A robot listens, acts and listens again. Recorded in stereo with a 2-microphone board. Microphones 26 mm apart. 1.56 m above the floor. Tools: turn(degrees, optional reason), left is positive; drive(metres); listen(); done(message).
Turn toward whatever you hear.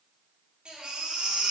turn(degrees=-40, reason="The baby crying: about 40° right or 140° right.")
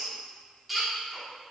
done("Found it: a baby crying, straight ahead.")